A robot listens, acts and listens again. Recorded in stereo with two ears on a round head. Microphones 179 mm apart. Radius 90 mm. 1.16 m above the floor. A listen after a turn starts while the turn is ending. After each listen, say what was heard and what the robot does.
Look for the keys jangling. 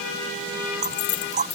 The keys jangling: about 35° left or 145° left. Turn 35° left.
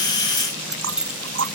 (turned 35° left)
Facing the keys jangling.